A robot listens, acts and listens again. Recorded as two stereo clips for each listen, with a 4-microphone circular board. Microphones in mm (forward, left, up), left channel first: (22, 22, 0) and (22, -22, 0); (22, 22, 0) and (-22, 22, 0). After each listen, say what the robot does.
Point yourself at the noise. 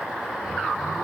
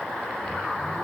Keep listening.
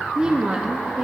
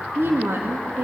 Turn 160° right.
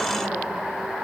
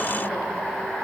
Keep listening.
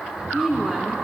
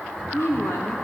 Turn 15° right.
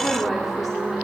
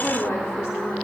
Found it: a woman speaking, straight ahead, 2 to 4 m away.